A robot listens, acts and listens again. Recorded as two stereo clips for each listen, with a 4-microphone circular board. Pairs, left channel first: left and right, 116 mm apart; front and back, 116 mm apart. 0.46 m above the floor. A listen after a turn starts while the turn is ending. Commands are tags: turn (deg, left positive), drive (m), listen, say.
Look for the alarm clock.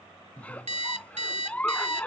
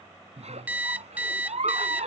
<turn deg="-105"/>
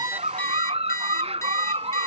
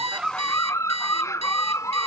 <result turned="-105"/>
<turn deg="25"/>
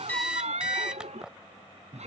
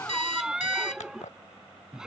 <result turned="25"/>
<say>Facing the alarm clock.</say>